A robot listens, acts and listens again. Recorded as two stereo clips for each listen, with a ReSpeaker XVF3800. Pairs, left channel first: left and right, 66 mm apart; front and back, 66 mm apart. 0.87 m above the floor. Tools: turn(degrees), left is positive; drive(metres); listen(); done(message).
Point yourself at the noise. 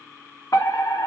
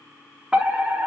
turn(degrees=105)
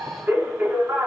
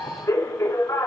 turn(degrees=-35)
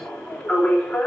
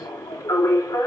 turn(degrees=10)
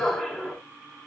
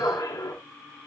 done("Facing the fire alarm.")